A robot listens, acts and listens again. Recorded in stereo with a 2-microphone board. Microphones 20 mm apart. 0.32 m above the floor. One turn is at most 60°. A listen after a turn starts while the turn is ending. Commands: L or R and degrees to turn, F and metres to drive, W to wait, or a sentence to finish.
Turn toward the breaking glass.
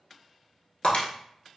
L60
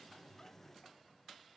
L30
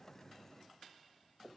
I heard breaking glass from this way, but can't make it out now.